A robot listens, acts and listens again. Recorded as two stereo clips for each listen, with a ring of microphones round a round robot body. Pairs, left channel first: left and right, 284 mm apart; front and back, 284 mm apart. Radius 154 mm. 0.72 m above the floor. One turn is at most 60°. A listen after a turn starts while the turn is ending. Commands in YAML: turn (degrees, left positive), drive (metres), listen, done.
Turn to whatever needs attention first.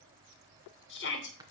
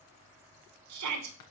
turn: 60
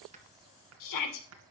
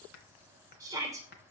turn: 60
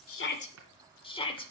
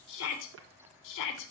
turn: 20
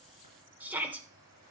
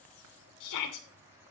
done: "Found it: a shout, straight ahead."